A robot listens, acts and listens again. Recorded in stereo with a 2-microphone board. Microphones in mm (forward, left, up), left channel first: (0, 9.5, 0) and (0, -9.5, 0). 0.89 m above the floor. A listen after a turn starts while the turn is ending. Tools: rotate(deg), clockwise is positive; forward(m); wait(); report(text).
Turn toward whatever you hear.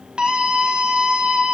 rotate(60)
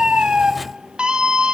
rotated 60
rotate(55)
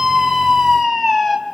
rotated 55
report("Facing the scream, over 4 m away.")